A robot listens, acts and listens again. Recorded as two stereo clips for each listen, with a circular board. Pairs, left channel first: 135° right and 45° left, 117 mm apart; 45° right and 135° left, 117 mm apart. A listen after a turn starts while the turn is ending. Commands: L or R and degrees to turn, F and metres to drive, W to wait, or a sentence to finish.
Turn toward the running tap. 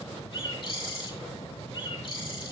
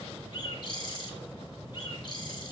W
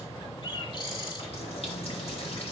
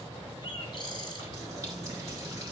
R165
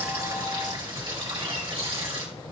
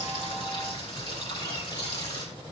Facing the running tap, 2 to 4 m away.